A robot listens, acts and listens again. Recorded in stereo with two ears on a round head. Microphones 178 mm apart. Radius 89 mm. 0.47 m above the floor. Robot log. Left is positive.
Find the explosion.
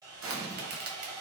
cmd yaw -90
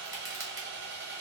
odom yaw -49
note: Nothing new. It was at 40° right.
cmd yaw -40
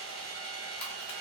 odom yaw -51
note: Nothing new. It was at 10° left.
cmd yaw +10
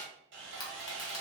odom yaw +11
end: I heard an explosion from this way, but can't make it out now.